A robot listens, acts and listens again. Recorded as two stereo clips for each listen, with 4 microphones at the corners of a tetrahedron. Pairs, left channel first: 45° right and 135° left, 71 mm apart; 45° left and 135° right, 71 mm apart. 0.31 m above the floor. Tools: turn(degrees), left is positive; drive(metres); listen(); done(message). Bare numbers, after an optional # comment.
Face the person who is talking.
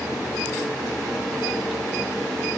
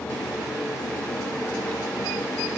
listen()
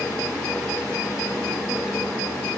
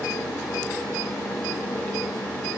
listen()
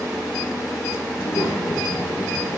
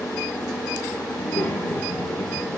# The child speaking: 25° right.
turn(-25)
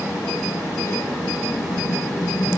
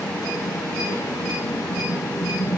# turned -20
done("Facing the child speaking.")